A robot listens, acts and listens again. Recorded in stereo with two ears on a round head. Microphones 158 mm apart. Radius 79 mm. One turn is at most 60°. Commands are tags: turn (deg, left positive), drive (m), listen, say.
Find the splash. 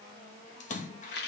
<turn deg="45"/>
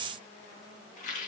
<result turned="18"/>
<listen/>
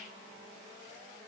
<say>I heard a splash, but can't make it out now. It was about 25° left or 120° left.</say>